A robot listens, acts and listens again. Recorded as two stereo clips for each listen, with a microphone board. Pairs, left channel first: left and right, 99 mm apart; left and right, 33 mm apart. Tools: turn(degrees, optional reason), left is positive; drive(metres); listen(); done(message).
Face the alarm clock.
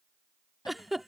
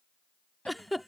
listen()
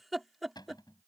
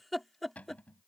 listen()
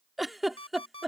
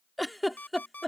turn(degrees=75, reason="The alarm clock: about 75° left or 105° left.")
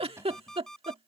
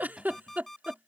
done("Facing the alarm clock.")